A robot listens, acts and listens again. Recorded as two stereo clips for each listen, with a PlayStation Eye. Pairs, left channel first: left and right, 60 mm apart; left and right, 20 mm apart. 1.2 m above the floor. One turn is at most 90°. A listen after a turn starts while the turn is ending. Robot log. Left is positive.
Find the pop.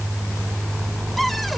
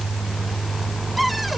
cmd idle
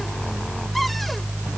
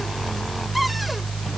cmd idle
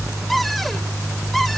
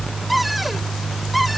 end: I can't make out a pop, only a cupboard door.